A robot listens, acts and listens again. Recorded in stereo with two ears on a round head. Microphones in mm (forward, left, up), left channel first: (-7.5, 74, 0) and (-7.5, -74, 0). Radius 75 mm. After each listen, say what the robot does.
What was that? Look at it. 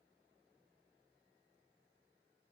Keep listening.
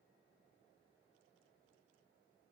Keep listening.
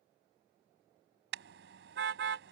Turn 70° right.
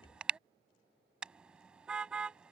Found it: a car horn, straight ahead.